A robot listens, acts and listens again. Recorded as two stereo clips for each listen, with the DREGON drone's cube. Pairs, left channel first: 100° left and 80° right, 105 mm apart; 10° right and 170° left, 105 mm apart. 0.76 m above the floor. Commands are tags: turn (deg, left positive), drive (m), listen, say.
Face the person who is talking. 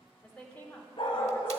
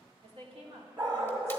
<turn deg="175"/>
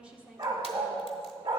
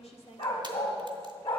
<say>Facing the woman speaking, 1 to 2 m away.</say>